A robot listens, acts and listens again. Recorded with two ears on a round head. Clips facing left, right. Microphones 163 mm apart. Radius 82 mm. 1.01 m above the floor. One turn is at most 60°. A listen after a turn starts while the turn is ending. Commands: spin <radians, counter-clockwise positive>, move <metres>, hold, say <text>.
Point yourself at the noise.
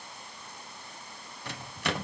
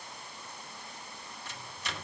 spin 0.96
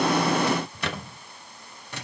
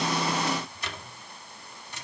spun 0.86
spin 1.05
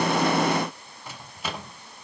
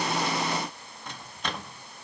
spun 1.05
say Found it: a microwave, straight ahead.